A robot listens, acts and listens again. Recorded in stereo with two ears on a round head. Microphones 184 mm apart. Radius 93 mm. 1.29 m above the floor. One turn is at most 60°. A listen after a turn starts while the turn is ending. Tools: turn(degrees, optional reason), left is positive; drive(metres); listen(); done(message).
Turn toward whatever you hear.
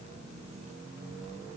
listen()
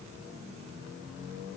listen()
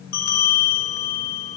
turn(degrees=45, reason="The bell: about 45° left or 135° left.")
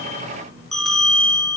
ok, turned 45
done("Facing the bell.")